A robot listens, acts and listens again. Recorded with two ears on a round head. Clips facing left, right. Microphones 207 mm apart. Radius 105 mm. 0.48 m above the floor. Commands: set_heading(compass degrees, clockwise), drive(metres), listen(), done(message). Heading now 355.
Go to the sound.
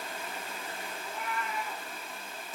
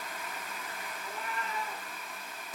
set_heading(25)
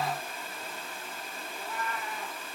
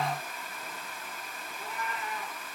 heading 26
set_heading(146)
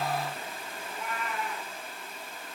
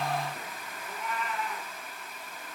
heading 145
drive(1.0)
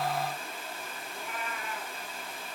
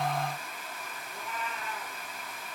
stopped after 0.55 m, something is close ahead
done("Blocked. The cat meowing is further on, straight ahead.")